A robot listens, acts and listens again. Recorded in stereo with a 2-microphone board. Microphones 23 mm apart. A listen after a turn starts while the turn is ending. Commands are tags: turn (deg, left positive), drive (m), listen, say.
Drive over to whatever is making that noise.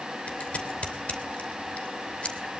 <turn deg="55"/>
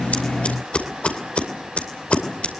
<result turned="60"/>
<turn deg="60"/>
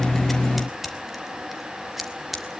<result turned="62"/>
<drive m="1.0"/>
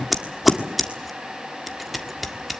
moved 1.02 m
<drive m="1.0"/>
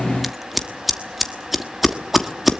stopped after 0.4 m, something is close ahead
<say>I am next to the scissors.</say>